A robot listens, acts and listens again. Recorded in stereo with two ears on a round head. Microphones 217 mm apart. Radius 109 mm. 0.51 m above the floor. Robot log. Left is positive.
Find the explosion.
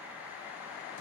cmd idle
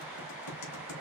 cmd idle
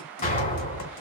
note: The explosion: about 35° left or 145° left.
cmd yaw +35
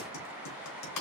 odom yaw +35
cmd idle
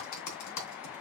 end: I heard an explosion, but can't make it out now. It was about straight ahead or 110° left.